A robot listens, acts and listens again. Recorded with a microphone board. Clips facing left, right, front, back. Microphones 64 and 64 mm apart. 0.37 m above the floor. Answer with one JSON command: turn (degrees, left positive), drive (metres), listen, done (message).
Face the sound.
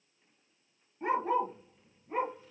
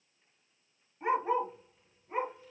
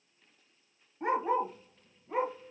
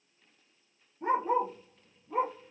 {"done": "Found it: a dog barking, straight ahead, 1 to 2 m away."}